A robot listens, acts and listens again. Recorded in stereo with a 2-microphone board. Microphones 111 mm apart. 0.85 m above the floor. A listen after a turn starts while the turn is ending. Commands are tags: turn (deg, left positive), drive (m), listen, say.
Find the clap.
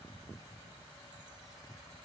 <listen/>
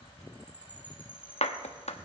<turn deg="70"/>
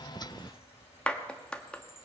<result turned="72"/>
<turn deg="10"/>
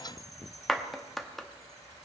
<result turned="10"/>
<say>Found it: a clap, straight ahead.</say>